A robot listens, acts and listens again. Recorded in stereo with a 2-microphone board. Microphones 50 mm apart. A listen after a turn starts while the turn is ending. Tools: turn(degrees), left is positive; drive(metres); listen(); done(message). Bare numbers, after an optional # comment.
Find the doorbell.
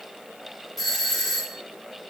turn(30)
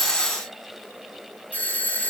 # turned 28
# So it is at 145° left.
turn(145)
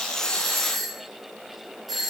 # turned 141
done("Facing the doorbell.")